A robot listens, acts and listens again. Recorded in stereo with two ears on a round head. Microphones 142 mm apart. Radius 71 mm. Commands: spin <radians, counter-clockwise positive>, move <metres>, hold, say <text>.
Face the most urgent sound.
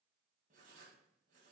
hold
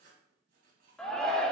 spin 0.52
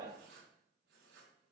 hold
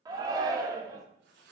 spin -0.44
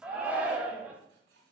spin -0.17
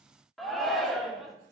say Facing the shout.